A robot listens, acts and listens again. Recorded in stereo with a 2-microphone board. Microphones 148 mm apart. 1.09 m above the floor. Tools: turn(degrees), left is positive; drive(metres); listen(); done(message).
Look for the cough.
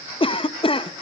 turn(degrees=40)
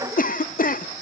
turn(degrees=100)
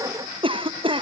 turn(degrees=-40)
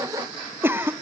turn(degrees=-15)
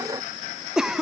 done("Found it: a cough, straight ahead.")